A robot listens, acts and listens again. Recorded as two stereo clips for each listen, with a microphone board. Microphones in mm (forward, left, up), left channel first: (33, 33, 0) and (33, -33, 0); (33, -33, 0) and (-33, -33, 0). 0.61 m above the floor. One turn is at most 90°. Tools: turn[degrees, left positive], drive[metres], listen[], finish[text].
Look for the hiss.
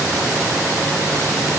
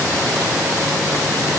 Action: listen[]
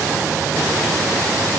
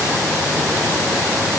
Action: listen[]
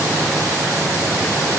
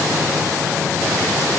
Action: finish[I can't make out a hiss.]